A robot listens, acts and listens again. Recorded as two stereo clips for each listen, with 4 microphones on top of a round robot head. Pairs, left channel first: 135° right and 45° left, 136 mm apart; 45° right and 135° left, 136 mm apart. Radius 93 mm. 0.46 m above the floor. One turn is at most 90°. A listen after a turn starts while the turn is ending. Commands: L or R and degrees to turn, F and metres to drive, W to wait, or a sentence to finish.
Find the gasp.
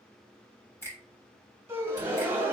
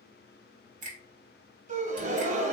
L90
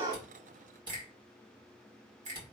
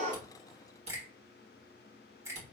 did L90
L30
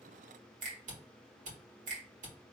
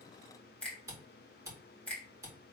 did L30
Facing where the gasp came from. I can't hear it now.